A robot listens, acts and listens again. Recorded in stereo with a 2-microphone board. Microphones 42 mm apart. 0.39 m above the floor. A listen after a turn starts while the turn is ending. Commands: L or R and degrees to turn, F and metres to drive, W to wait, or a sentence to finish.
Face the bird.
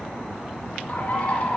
L40
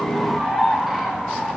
Facing the bird, 1 to 2 m away.